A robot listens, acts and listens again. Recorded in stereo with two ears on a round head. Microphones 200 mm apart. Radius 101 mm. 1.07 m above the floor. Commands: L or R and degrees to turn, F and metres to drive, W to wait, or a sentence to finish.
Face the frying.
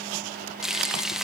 L30
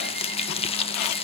L155
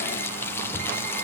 L10
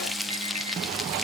Facing the frying.